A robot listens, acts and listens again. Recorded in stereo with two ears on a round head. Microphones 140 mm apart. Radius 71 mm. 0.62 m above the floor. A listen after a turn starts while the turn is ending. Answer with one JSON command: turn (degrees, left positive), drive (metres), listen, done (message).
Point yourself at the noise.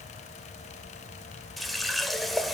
{"turn": 30}
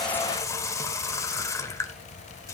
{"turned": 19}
{"turn": 160}
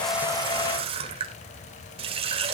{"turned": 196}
{"turn": -35}
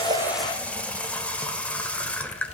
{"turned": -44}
{"turn": 10}
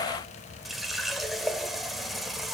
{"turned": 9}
{"done": "Facing the running tap."}